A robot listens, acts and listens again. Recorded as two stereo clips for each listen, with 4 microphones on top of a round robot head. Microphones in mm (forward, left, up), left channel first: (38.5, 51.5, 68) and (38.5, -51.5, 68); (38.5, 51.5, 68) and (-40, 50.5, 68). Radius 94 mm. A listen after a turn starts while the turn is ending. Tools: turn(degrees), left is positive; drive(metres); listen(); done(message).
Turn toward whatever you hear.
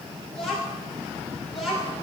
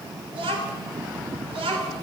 turn(degrees=180)
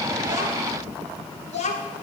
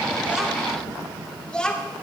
turn(degrees=80)
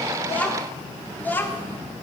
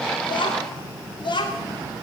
turn(degrees=20)
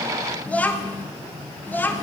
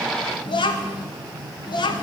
turn(degrees=15)
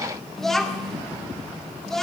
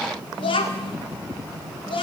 done("Found it: a child speaking, straight ahead, 1 to 2 m away.")